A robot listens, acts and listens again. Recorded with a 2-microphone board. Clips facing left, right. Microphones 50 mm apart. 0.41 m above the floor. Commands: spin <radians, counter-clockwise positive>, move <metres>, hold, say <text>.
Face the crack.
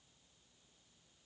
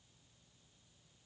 hold
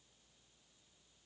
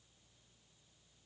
hold
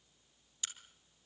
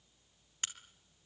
spin -0.87
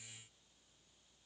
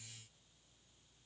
hold
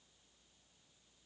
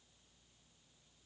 say I heard a crack, but can't make it out now. It was about straight ahead or 80° right.